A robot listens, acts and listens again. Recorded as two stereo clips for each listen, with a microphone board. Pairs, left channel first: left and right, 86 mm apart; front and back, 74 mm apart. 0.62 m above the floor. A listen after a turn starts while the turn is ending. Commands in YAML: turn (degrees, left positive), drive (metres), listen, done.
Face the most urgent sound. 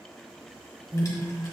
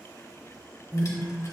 turn: -25
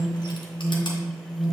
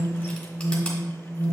turn: 10
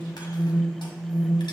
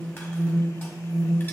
done: "Found it: an alarm, straight ahead, 1 to 2 m away."